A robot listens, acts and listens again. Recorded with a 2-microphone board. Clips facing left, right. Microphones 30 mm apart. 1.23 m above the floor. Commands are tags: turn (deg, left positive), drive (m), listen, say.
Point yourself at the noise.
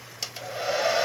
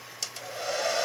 <turn deg="20"/>
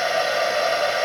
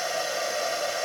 <turn deg="140"/>
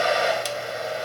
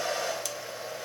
<turn deg="40"/>
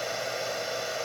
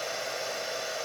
<say>Found it: a hair dryer, straight ahead, 1 to 2 m away.</say>